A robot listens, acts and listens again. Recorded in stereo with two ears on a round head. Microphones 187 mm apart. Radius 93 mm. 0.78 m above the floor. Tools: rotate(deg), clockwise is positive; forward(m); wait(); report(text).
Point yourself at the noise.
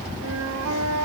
rotate(90)
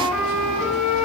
report("Found it: a flute, straight ahead.")